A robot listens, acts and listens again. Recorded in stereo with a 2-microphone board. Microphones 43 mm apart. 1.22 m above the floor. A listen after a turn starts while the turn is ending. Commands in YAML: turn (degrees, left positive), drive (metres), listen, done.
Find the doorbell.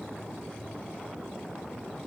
listen: true
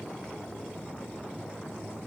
listen: true
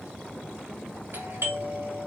turn: -60
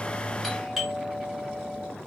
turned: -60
done: "Found it: a doorbell, straight ahead, 2 to 4 m away."